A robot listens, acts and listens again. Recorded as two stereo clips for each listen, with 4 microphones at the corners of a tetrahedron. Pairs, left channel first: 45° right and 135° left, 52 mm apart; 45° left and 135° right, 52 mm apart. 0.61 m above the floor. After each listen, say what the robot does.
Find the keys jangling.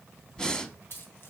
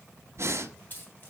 Facing the keys jangling.